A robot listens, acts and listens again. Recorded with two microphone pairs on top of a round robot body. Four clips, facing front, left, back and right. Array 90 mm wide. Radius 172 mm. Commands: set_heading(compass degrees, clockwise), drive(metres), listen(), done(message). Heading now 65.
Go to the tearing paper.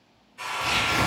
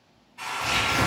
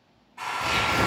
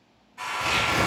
set_heading(185)
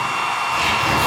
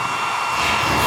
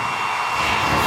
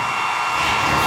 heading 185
listen()
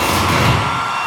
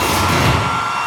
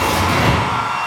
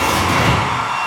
drive(1.0)
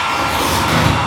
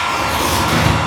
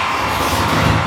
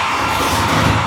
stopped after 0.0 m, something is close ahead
done("Blocked. The tearing paper is further on, straight ahead.")